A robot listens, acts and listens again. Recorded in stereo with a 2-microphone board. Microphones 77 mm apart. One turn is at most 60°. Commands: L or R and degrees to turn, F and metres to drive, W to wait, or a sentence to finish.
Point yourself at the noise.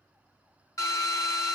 L45
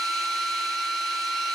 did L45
Facing the drill.